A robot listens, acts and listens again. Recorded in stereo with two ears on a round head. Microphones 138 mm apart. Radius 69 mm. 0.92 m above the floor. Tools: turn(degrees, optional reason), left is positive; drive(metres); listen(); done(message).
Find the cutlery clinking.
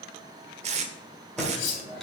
turn(degrees=90)
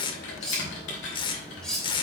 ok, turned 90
done("Facing the cutlery clinking.")